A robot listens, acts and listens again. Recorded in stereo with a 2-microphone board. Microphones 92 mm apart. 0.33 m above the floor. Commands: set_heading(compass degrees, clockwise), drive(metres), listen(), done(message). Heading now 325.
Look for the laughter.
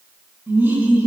set_heading(350)
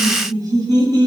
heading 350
set_heading(120)
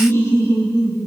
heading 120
set_heading(85)
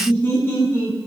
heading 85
set_heading(55)
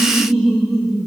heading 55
done("Found it: laughter, straight ahead, 2 to 4 m away.")